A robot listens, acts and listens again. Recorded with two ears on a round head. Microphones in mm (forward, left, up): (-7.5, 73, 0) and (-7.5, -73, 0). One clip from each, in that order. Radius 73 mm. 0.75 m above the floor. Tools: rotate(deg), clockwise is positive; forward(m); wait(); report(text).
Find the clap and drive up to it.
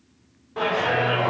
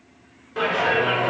rotate(55)
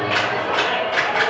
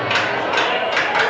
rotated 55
rotate(70)
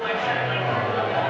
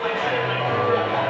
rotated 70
rotate(30)
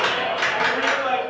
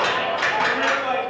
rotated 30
rotate(-15)
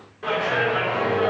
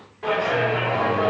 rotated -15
forward(1.0)
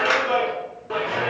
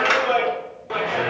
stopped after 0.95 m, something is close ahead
rotate(15)
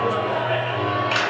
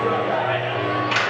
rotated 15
report("Arrived at the clap, straight ahead.")